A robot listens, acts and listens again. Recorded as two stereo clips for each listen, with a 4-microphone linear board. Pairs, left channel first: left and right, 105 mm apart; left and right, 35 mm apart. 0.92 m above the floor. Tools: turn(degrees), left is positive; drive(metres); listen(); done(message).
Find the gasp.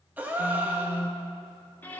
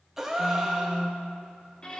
turn(degrees=-15)
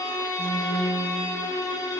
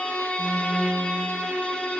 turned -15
listen()
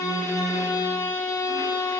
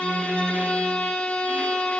done("I heard a gasp, but can't make it out now. It was about straight ahead or 150° right.")